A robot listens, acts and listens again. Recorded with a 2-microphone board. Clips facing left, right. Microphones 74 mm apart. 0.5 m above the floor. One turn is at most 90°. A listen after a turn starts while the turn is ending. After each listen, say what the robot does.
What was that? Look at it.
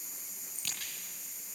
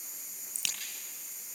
Turn 90° right.
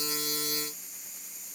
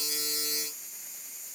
I heard a crack from this way, but can't make it out now.